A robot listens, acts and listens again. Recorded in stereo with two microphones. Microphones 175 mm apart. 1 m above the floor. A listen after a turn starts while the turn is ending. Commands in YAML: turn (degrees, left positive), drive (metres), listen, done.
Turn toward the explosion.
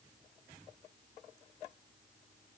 listen: true
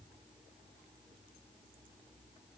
listen: true
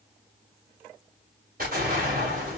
turn: -60
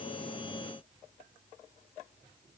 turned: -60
listen: true
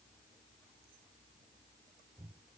done: "I heard an explosion, but can't make it out now. It was about straight ahead or 60° right."